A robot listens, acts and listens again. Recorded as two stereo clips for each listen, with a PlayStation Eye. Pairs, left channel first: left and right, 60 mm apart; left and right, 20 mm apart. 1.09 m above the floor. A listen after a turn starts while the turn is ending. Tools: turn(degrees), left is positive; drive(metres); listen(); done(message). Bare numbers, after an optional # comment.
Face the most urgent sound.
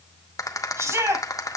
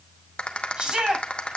# The shout: about 45° right or 135° right.
turn(-45)
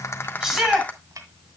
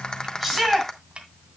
done("Facing the shout.")